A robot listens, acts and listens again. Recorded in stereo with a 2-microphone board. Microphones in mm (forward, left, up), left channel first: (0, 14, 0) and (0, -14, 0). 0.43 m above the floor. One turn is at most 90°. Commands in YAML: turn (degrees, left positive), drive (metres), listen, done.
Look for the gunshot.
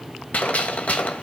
turn: 65
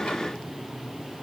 listen: true
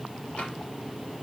done: "I heard a gunshot, but can't make it out now. It was about straight ahead or 50° left."